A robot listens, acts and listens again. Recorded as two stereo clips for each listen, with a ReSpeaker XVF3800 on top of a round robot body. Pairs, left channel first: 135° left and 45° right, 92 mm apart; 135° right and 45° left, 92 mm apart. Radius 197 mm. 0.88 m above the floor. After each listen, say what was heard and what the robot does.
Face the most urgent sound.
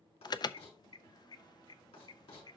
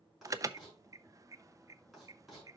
The alarm: 95° left. Turn 95° left.
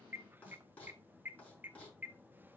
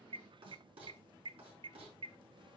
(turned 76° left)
The alarm is now 20° left. Turn 20° left.
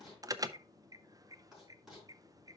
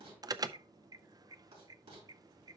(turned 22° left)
Facing the alarm, under 1 m away.